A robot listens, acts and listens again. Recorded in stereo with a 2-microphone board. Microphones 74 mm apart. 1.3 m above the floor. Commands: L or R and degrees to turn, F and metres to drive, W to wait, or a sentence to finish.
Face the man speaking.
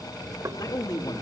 L65
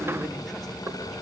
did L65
W
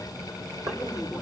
Found it: a man speaking, straight ahead, over 4 m away.